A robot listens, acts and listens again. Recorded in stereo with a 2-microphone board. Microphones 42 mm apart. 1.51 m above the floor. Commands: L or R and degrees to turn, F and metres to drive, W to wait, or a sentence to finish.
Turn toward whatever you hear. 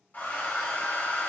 L45
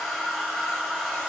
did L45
Facing the hair dryer, 1 to 2 m away.